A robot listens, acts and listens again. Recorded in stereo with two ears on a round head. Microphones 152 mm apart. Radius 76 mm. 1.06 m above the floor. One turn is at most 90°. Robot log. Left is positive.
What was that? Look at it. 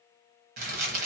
note: The crumpling: about 55° right or 125° right.
cmd yaw -55
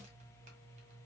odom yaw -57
cmd idle
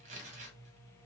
note: So it is at 50° right.
cmd yaw -50
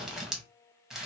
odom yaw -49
end: Facing the crumpling, under 1 m away.